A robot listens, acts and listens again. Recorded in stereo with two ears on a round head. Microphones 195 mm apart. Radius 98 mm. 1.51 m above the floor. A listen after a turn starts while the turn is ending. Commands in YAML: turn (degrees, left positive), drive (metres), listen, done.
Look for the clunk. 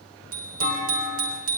turn: 75
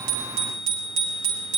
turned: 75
listen: true
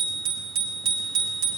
done: "I heard a clunk, but can't make it out now. It was about straight ahead or 30° left."